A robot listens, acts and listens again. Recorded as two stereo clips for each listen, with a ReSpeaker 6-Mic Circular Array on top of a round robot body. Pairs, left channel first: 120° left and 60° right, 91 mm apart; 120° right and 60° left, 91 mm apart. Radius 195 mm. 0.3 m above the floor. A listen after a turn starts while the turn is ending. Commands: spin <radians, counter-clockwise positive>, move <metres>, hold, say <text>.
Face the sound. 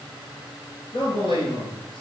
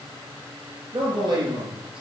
spin 1.66
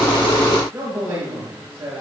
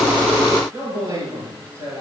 say Facing the man speaking, over 4 m away.